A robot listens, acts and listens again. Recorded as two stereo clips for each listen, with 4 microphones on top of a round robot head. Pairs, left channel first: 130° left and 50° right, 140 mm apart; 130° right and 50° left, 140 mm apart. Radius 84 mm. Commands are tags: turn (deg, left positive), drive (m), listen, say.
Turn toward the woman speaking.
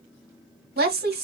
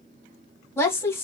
<turn deg="-55"/>
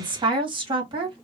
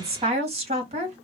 <say>Facing the woman speaking.</say>